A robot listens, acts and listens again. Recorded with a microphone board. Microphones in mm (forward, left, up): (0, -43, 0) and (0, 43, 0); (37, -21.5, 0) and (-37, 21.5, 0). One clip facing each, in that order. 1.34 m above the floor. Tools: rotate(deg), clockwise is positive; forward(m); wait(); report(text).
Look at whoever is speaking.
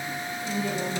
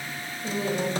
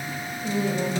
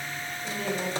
rotate(-40)
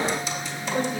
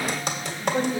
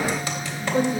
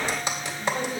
rotate(-10)
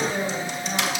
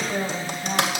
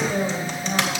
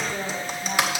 report("Found it: a woman speaking, straight ahead, 2 to 4 m away.")